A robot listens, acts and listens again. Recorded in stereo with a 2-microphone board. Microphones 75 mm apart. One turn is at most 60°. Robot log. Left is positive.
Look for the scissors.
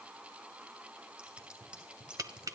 cmd yaw -30
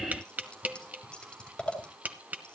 note: So it is at 15° left.
cmd yaw +15
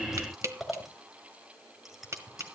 end: Found it: scissors, straight ahead.